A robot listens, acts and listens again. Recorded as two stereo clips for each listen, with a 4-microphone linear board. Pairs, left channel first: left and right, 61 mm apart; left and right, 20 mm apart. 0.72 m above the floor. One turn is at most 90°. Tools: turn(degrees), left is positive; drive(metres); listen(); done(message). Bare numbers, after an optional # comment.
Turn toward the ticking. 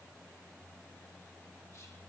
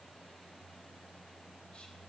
listen()
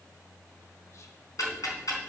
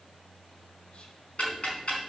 # The ticking: about 70° left or 110° left.
turn(70)
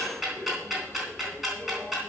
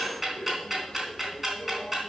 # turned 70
done("Found it: ticking, straight ahead.")